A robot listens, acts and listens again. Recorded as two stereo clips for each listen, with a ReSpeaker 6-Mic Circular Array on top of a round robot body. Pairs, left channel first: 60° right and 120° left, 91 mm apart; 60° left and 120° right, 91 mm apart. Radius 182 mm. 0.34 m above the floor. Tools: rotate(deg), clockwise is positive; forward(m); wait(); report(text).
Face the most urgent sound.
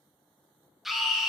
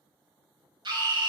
rotate(150)
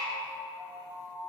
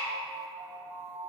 wait()
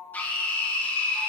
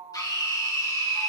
rotate(-10)
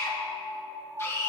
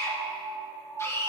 report("Facing the scream.")